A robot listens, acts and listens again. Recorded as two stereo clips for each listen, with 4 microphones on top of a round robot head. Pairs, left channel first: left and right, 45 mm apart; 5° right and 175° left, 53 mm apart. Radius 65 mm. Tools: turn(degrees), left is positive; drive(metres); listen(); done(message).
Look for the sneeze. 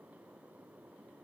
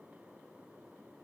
listen()
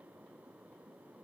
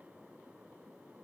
listen()
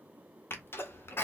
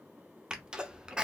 turn(degrees=105)
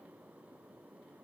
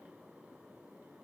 done("Facing where the sneeze came from. I can't hear it now.")